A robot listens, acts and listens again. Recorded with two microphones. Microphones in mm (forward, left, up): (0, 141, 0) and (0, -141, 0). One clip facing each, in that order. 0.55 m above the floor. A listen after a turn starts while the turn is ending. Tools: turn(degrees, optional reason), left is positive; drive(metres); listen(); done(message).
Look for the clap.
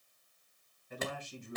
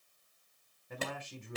turn(degrees=-35, reason="The clap: about 35° right or 145° right.")
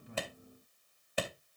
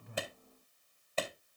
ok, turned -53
turn(degrees=15, reason="So it is at 15° left.")
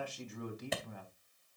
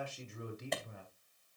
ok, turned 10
done("Found it: a clap, straight ahead, 2 to 4 m away.")